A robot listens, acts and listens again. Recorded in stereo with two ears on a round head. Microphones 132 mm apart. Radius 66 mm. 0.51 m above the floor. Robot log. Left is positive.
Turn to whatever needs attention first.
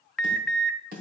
cmd yaw +30
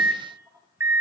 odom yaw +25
note: So it is at 20° right.
cmd yaw -20
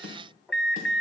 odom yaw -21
end: Found it: an alarm, straight ahead, under 1 m away.